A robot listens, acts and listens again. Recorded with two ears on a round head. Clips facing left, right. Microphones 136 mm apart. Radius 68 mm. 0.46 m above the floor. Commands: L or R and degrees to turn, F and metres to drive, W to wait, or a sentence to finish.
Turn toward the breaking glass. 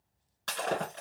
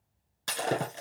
R30
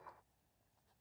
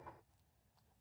W
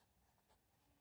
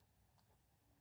I heard breaking glass, but can't make it out now. It was about 15° left or 135° right.